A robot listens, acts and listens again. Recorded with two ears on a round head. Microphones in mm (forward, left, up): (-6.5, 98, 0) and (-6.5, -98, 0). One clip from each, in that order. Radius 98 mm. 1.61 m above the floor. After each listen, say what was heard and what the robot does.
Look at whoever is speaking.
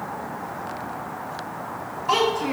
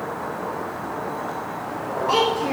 The child speaking: about 15° left or 165° left. Turn 15° left.
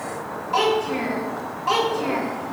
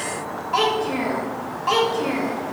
Facing the child speaking, 2 to 4 m away.